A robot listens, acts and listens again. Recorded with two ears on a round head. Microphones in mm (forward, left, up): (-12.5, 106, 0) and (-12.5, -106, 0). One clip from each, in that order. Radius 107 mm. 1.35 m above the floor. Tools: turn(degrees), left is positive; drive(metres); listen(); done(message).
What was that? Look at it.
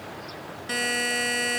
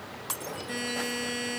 turn(degrees=35)
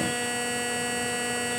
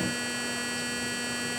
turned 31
done("Facing the buzzer, 1 to 2 m away.")